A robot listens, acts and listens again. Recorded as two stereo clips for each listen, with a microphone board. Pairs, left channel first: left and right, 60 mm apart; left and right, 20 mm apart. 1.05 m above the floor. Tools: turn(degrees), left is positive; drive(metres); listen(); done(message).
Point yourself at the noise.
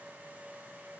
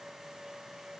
listen()
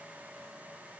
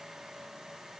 listen()
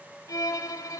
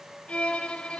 turn(degrees=90)
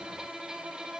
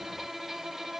turn(degrees=-15)
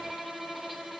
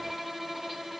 done("Facing the violin.")